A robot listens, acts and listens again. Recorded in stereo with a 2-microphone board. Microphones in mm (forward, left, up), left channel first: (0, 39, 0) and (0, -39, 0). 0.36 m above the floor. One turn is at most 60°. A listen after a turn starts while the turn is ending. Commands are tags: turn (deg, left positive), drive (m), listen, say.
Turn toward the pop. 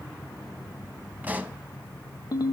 <turn deg="-20"/>
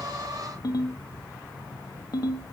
<listen/>
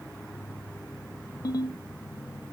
<say>I heard a pop, but can't make it out now. It was about straight ahead or 140° right.</say>